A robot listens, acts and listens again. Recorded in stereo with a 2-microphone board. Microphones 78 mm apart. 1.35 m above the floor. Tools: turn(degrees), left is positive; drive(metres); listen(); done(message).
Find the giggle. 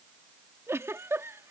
turn(degrees=-35)
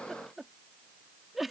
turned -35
done("Found it: a giggle, straight ahead.")